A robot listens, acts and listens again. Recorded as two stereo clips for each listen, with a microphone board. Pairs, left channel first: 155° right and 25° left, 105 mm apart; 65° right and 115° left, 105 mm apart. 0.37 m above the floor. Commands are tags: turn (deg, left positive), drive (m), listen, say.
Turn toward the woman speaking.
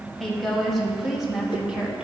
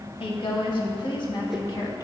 <turn deg="-55"/>
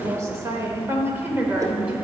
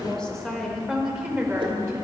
<turn deg="90"/>
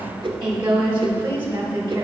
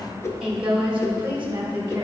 <turn deg="45"/>
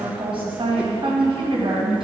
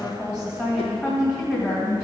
<say>Facing the woman speaking, 2 to 4 m away.</say>